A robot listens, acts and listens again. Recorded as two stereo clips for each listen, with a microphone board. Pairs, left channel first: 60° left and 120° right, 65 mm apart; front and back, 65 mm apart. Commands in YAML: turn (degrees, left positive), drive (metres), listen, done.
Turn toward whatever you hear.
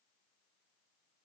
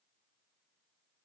listen: true
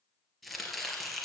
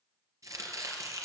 turn: 150
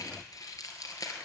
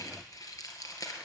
turn: 30
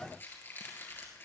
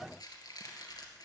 done: "Facing the chopping, 2 to 4 m away."